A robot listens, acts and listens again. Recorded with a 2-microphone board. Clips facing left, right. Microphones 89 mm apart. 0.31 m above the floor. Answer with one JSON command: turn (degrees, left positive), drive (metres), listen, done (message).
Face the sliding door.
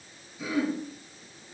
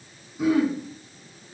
{"listen": true}
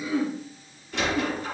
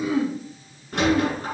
{"turn": -50}
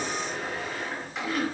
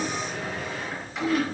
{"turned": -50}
{"listen": true}
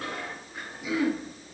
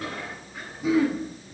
{"listen": true}
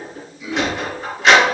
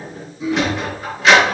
{"done": "Found it: a sliding door, straight ahead."}